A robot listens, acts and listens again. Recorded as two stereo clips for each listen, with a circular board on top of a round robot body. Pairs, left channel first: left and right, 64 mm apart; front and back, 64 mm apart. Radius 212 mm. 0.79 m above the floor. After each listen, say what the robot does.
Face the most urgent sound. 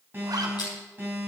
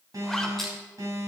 Turn 150° right.
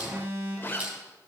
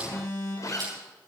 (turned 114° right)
Turn 35° right.
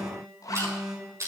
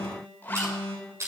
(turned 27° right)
Turn 10° right.
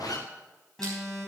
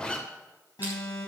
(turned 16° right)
Facing the alarm.